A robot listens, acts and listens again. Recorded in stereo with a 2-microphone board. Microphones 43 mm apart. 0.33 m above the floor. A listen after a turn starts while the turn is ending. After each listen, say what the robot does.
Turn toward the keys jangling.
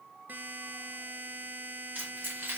Turn 50° right.
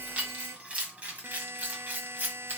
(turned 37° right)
Turn 45° right.
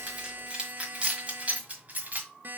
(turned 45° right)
Turn 35° right.
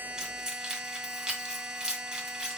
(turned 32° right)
Turn 10° right.
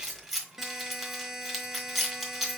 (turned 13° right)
Found it: keys jangling, straight ahead.